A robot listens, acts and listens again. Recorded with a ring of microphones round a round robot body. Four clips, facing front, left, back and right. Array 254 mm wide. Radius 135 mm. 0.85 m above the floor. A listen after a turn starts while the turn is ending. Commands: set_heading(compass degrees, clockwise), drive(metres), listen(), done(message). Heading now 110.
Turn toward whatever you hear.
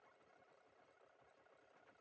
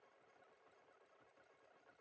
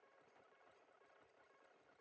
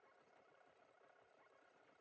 listen()
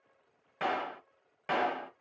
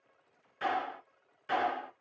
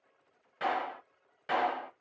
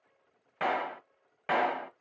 set_heading(185)
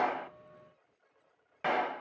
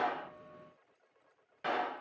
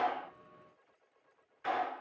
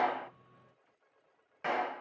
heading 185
set_heading(195)
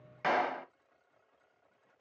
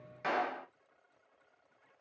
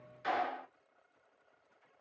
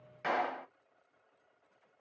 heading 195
done("Facing the clap, under 1 m away.")